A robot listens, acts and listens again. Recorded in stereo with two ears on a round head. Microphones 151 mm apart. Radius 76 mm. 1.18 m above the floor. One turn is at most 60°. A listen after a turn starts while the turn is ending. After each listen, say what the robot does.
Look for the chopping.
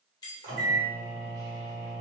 Keep listening.
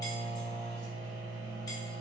Keep listening.
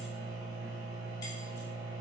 I can't make out chopping, only a microwave and keys jangling.